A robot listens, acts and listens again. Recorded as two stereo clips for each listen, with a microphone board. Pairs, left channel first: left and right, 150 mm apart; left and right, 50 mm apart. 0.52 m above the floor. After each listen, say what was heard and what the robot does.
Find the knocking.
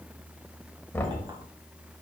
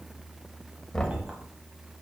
Turn 30° left.
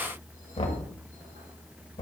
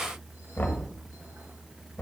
So it is at 135° left. Turn 135° left.
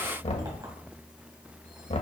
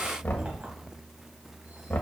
The knocking is now 45° left. Turn 45° left.
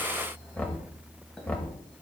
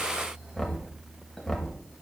The knocking is now 10° left. Turn 10° left.
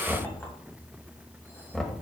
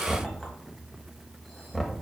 Facing the knocking, 1 to 2 m away.